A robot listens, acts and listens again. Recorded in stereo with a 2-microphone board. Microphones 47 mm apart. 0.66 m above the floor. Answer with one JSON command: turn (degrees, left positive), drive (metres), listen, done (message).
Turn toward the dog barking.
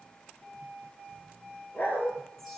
{"turn": 40}
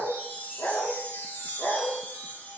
{"turn": 110}
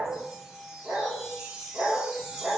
{"turn": -30}
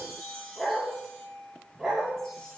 {"turn": -10}
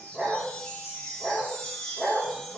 {"done": "Facing the dog barking, over 4 m away."}